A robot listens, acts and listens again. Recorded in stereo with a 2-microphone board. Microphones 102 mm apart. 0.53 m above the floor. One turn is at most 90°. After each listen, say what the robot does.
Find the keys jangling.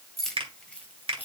Turn 20° left.
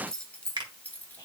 Turn 15° left.
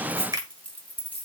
Turn 15° left.
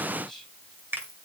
Keep listening.
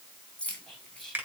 Turn 30° left.
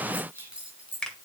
Turn 10° right.
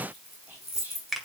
Found it: keys jangling, straight ahead, 2 to 4 m away.